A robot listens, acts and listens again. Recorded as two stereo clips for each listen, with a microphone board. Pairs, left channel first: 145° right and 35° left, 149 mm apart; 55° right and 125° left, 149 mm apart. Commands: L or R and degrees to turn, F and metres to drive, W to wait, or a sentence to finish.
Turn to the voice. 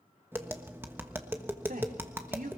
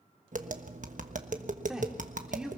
L40
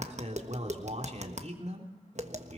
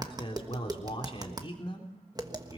Facing the man speaking.